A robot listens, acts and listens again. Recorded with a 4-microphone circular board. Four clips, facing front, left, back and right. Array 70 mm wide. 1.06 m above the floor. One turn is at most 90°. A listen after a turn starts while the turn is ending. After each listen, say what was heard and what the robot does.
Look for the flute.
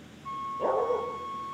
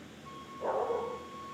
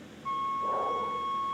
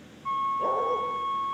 The flute: 105° right. Turn 90° right.
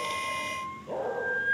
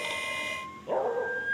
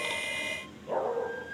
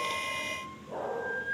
The flute is now 15° left. Turn 15° left.
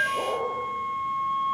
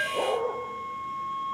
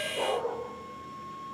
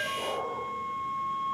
Facing the flute.